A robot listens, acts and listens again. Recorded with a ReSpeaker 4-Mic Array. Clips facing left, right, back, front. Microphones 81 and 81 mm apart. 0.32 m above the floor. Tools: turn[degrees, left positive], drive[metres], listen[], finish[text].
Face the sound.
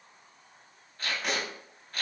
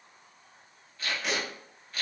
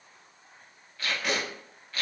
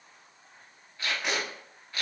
Thought: The tape being pulled: 60° left.
Action: turn[60]
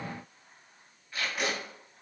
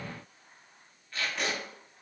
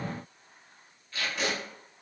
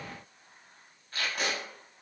Thought: The tape being pulled is now 10° left.
Action: turn[10]
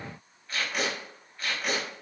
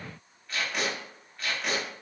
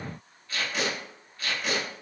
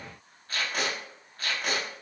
Action: finish[Facing the tape being pulled, under 1 m away.]